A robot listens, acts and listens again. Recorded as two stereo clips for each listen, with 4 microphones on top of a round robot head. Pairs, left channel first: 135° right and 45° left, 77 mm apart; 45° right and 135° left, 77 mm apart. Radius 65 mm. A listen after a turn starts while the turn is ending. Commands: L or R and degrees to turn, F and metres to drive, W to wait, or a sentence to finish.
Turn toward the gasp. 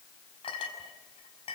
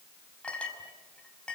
W
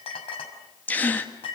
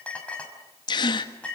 R65
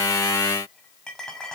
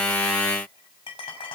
Facing where the gasp came from. I can't hear it now.